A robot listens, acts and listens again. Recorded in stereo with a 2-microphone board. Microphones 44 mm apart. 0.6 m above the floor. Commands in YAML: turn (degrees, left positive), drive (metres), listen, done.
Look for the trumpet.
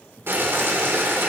listen: true
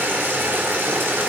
listen: true
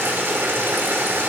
done: "I can't make out a trumpet to turn to."